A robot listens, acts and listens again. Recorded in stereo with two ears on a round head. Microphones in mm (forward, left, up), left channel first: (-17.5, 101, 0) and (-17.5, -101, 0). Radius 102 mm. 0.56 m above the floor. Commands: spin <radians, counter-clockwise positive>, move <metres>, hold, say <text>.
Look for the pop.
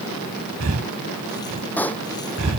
spin 0.52
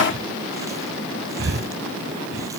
hold
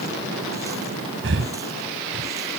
say I heard a pop, but can't make it out now. It was about 20° right or 140° left.